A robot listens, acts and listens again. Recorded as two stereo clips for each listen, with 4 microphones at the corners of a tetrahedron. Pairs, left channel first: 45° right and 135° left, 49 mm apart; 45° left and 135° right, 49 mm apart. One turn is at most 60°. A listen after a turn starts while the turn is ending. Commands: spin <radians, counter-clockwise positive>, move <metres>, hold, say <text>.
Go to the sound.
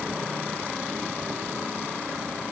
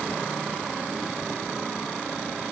hold
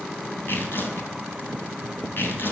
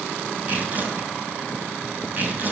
spin -1.05
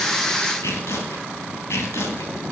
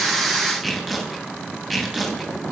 spin -0.87
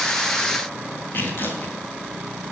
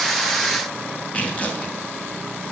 spin -0.17
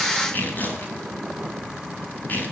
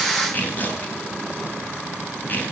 move 1.0
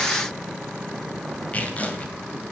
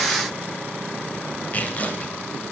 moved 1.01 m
move 1.0
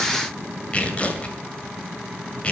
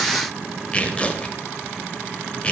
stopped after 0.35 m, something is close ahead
say I am next to the tearing paper.